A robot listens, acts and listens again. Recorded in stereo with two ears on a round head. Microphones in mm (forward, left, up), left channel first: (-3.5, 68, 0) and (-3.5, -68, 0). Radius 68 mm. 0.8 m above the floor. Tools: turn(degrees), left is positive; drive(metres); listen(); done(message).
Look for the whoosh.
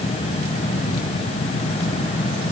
listen()
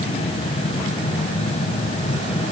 listen()
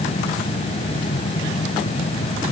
done("I can't make out a whoosh.")